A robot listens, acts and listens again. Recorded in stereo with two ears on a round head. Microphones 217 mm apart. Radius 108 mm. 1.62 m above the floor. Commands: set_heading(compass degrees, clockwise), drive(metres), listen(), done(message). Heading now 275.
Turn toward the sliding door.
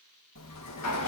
set_heading(185)
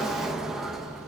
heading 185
done("Found it: a sliding door, straight ahead.")